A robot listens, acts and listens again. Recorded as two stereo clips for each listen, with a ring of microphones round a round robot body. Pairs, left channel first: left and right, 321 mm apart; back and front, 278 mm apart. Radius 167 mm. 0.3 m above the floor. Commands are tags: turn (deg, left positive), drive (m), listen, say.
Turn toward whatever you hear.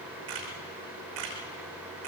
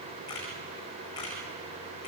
<turn deg="-100"/>
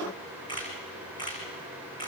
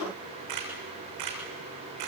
<turn deg="15"/>
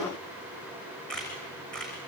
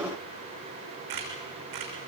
<say>Found it: a camera shutter, straight ahead.</say>